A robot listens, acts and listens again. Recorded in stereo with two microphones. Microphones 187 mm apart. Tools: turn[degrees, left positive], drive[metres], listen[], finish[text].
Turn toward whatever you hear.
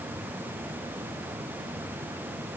Action: listen[]
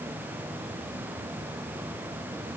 Action: listen[]
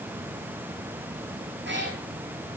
Action: turn[-90]
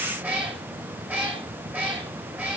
Thought: So it is at 10° right.
Action: turn[-10]
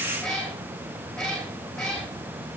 Action: finish[Found it: a cat meowing, straight ahead, over 4 m away.]